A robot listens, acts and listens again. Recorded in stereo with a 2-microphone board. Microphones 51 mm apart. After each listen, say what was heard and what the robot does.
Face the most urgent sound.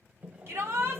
The shout: about 60° right or 120° right. Turn 60° right.
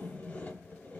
Keep listening.
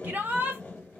So it is at 40° right. Turn 40° right.
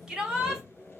The shout is now 15° right. Turn 15° right.
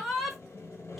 Facing the shout.